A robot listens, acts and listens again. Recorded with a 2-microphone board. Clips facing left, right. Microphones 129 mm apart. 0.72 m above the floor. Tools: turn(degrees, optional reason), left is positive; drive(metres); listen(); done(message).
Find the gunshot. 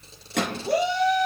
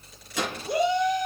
turn(degrees=60, reason="The gunshot: about 60° left or 120° left.")
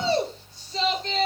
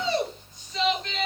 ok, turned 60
listen()
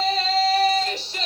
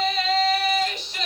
done("I heard a gunshot, but can't make it out now. It was about straight ahead or 60° left.")